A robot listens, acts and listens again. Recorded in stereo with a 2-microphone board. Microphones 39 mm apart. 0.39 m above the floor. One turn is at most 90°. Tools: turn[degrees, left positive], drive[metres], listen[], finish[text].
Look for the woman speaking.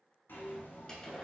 Action: listen[]
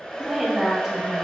Action: turn[-30]
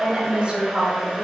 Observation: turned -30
Thought: So it is at 135° right.
Action: turn[-90]
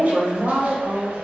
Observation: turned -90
Thought: The woman speaking is now 35° right.
Action: turn[-35]
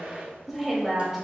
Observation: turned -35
Action: finish[Found it: a woman speaking, straight ahead, 1 to 2 m away.]